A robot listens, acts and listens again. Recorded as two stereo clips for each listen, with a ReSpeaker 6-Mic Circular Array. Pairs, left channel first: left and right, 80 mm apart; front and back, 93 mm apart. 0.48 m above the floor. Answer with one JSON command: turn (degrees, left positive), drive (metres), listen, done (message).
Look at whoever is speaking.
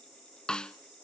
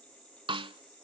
{"listen": true}
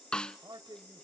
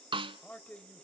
{"turn": -70}
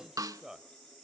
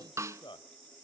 {"done": "Facing the man speaking, 1 to 2 m away."}